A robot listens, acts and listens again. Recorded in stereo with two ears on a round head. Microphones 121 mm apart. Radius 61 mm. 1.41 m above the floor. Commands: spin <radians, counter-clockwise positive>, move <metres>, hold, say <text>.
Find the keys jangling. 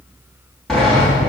hold
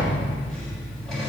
hold
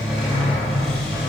say I can't make out keys jangling, only a sliding door.